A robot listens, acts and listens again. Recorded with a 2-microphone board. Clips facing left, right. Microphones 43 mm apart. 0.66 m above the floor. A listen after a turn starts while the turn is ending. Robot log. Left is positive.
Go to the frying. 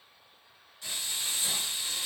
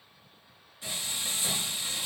note: The frying: about 20° right or 160° right.
cmd yaw -20
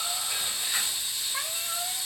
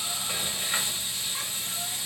note: So it is at 140° right.
cmd yaw -140
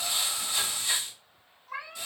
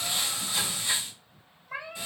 note: The frying is now 25° right.
cmd yaw -25
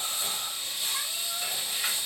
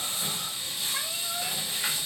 cmd fwd 1.0
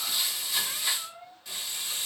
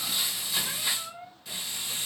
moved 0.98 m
cmd fwd 1.0
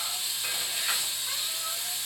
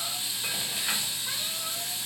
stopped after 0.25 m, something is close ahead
end: Arrived at the frying, straight ahead.